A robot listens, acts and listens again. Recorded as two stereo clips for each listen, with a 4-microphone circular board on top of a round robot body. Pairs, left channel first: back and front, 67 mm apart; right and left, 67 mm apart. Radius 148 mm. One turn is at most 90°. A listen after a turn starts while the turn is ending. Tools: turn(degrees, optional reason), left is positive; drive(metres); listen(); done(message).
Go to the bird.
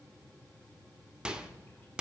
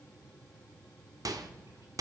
listen()
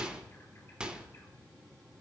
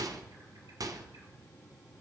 listen()
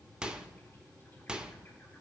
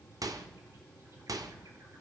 done("I can't make out a bird to turn to.")